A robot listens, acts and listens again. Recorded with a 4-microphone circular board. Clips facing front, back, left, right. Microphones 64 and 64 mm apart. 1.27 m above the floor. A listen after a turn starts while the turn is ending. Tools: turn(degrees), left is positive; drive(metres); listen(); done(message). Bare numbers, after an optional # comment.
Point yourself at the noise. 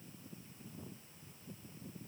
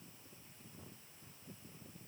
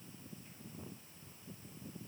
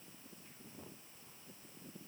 listen()
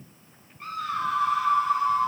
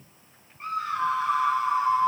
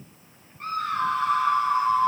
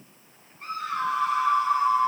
# The scream: 120° left.
turn(120)
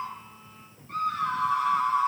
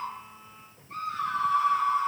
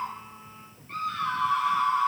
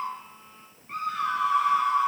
# The scream is now 15° right.
turn(-15)
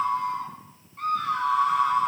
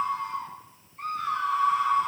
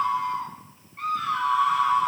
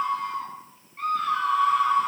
done("Found it: a scream, straight ahead, over 4 m away.")